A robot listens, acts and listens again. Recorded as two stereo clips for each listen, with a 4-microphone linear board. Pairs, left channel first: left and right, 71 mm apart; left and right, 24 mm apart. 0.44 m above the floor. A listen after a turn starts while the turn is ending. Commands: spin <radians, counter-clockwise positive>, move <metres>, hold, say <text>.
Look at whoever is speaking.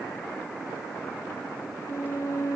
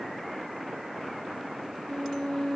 hold
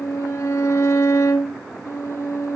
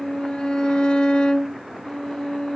hold
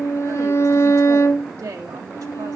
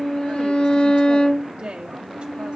spin -0.87
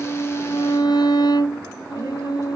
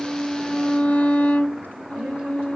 hold
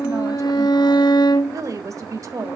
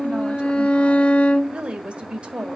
spin -1.22
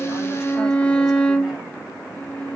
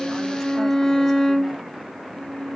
hold
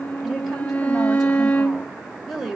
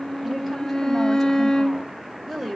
say Found it: a woman speaking, straight ahead, 1 to 2 m away.